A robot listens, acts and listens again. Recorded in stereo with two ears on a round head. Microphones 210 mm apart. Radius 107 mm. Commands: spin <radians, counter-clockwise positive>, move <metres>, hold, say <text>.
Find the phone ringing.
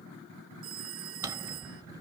spin -1.22
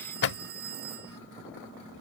spin -0.70
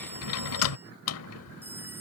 hold
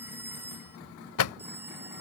spin -0.17
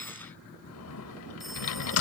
hold
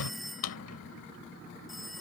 say Facing the phone ringing.